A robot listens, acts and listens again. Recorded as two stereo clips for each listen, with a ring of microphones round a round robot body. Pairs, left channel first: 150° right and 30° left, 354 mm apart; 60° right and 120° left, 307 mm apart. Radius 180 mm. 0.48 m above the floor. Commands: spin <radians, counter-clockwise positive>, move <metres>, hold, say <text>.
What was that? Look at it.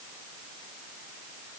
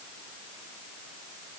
hold
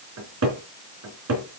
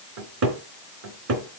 spin 1.40
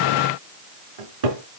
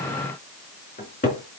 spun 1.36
say Found it: a cupboard door, straight ahead.